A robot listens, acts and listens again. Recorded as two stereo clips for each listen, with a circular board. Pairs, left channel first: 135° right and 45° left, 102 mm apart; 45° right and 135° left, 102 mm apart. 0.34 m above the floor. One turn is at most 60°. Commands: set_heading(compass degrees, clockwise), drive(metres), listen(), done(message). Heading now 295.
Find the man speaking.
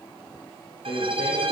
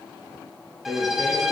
set_heading(355)
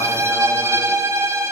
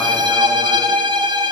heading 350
set_heading(50)
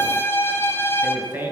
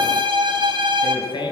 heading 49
set_heading(69)
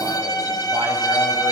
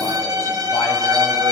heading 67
listen()
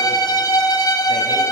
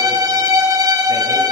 listen()
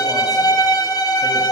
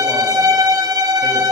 done("Facing where the man speaking came from. I can't hear it now.")